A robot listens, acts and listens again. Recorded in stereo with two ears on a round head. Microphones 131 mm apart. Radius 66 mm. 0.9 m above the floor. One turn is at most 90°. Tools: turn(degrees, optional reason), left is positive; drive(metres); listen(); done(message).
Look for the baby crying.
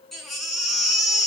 turn(degrees=30)
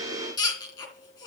turn(degrees=90, reason="So it is at 150° left.")
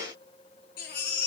turn(degrees=65, reason="The baby crying is now 65° left.")
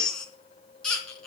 done("Facing the baby crying.")